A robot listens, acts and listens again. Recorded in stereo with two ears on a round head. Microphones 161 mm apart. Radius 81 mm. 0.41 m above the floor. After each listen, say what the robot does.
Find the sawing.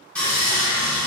Turn 30° left.
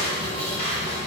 Turn 145° left.
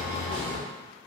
Facing the sawing, 1 to 2 m away.